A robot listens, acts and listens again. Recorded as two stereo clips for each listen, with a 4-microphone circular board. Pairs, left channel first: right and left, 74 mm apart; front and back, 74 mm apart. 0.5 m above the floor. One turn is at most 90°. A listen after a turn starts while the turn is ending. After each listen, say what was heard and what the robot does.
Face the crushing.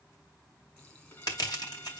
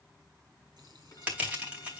The crushing: 110° right. Turn 90° right.
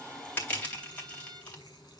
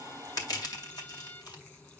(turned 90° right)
The crushing is now 20° right. Turn 20° right.
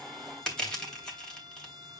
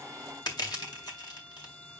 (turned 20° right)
The crushing is now 10° right. Turn 10° right.
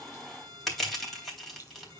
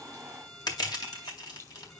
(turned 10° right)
Found it: crushing, straight ahead.